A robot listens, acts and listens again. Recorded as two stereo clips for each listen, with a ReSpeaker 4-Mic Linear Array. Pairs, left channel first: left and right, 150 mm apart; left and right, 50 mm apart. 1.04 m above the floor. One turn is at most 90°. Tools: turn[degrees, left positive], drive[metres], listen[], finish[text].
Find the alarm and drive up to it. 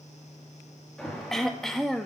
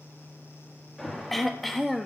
Action: turn[30]
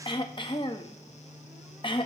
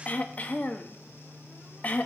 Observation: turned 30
Action: listen[]
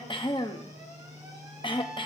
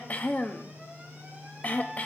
Action: listen[]
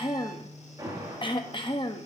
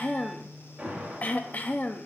Thought: So it is at 25° right.
Action: turn[-25]
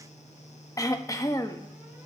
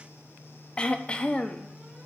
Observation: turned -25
Action: listen[]
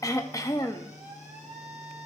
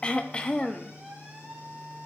Thought: The alarm is now 15° right.
Action: turn[-15]
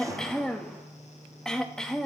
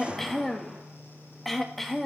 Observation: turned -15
Action: drive[1.0]
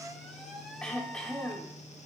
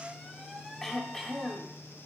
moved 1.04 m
Action: drive[1.0]
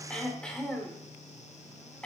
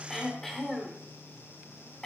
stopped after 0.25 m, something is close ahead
Action: listen[]
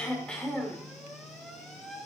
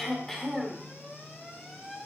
Action: finish[Arrived at the alarm, straight ahead.]